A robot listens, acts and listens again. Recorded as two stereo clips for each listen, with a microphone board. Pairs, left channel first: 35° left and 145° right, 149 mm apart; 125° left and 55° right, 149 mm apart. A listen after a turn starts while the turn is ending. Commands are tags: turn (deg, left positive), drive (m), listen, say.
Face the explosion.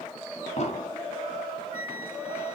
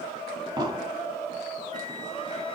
<say>Facing the explosion.</say>